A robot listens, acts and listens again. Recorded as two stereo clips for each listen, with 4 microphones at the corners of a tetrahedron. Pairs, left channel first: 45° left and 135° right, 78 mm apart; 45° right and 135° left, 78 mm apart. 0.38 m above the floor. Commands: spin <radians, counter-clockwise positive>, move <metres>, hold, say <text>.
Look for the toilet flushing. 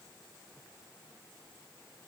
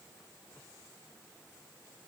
hold
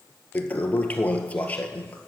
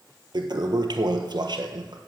spin 2.01
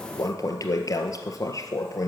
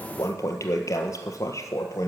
say Found it: a toilet flushing, straight ahead.